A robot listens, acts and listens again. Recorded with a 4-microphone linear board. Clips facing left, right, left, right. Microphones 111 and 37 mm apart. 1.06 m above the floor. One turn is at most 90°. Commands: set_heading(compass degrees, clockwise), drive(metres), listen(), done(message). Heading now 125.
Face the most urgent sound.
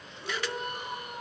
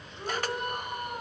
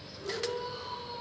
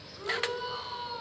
set_heading(175)
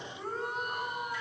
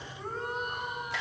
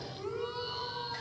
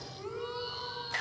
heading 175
done("Facing the shout.")